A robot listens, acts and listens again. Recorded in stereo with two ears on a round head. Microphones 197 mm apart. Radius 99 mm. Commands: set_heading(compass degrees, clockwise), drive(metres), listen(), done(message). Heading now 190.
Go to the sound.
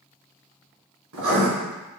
set_heading(255)
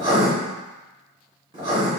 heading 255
set_heading(280)
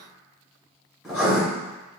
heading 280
drive(1.0)
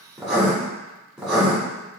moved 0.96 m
drive(1.0)
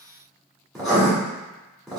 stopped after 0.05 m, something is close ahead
done("I am next to the writing.")